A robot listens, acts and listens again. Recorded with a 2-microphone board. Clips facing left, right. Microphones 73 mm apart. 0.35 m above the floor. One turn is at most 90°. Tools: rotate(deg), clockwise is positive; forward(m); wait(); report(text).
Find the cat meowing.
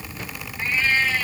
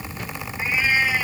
rotate(30)
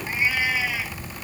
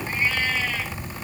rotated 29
rotate(-15)
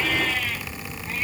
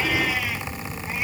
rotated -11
wait()
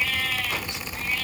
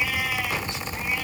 rotate(10)
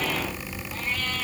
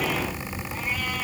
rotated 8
wait()
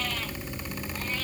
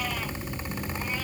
wait()
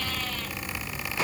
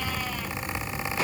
report("I heard a cat meowing from this way, but can't make it out now.")